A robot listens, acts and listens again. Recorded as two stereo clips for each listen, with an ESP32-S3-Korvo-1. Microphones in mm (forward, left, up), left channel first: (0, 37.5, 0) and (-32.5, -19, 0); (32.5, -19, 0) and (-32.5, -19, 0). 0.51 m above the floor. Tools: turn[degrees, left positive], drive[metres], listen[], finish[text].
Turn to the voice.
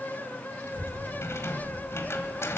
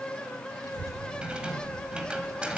Thought: The child speaking: 25° left.
Action: turn[25]
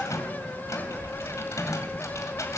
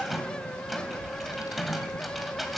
Thought: The child speaking is now 10° left.
Action: turn[10]
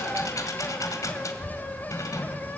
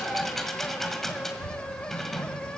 Action: finish[Facing the child speaking.]